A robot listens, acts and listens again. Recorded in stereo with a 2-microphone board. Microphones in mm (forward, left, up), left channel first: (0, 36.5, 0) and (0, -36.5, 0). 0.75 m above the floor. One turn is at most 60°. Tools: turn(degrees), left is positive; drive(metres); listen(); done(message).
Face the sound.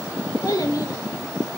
turn(degrees=60)
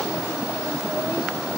listen()
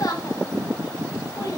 turn(degrees=60)
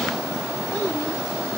listen()
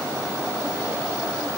listen()
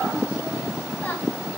turn(degrees=25)
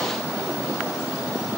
listen()
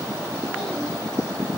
listen()
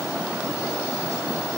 done("Facing where the child speaking came from. I can't hear it now.")